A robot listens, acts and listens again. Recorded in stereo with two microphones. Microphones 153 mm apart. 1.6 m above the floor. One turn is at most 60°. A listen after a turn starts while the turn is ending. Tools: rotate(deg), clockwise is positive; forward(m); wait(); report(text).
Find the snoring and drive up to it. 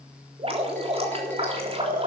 rotate(60)
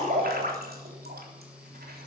wait()
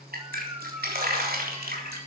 rotate(25)
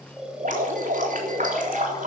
forward(1.0)
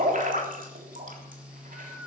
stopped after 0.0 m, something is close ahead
report("Blocked. The snoring is further on, straight ahead.")